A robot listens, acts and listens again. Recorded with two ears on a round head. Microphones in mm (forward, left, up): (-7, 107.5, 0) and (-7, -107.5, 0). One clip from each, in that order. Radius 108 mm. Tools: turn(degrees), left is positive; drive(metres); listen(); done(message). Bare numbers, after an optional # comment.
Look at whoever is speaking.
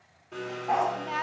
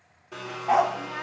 # The woman speaking: about 40° left or 140° left.
turn(40)
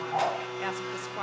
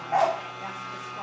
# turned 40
# So it is at 100° left.
turn(100)
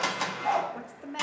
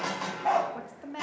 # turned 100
done("Found it: a woman speaking, straight ahead, 1 to 2 m away.")